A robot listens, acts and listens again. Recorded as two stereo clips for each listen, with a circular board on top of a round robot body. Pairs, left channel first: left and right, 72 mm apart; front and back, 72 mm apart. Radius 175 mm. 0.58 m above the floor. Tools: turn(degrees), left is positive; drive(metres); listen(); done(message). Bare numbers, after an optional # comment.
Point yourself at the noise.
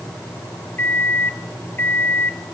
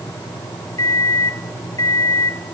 # The microwave: 30° left.
turn(30)
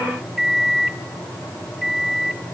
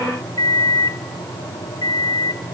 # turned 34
done("Found it: a microwave, straight ahead, 1 to 2 m away.")